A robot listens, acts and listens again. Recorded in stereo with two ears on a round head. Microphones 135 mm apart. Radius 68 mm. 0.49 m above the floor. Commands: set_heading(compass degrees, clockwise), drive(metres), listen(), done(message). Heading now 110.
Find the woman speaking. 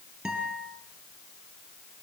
listen()
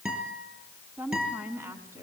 set_heading(130)
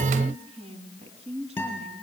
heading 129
set_heading(264)
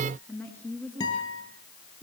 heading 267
set_heading(257)
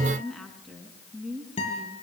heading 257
done("Found it: a woman speaking, straight ahead.")